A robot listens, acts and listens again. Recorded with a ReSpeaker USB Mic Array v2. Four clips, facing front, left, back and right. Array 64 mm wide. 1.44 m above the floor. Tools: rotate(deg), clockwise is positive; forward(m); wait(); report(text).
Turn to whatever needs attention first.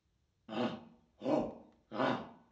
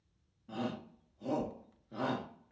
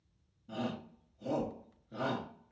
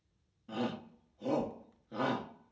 rotate(15)
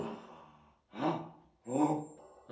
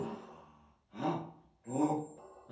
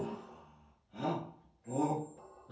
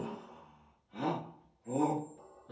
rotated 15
report("Facing the shout, 1 to 2 m away.")